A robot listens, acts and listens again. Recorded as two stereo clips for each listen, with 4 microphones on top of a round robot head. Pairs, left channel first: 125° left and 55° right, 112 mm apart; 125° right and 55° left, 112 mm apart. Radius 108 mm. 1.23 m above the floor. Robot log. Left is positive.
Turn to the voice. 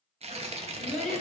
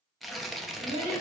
note: The child speaking: 40° left.
cmd yaw +40
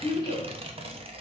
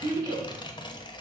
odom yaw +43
end: Facing the child speaking.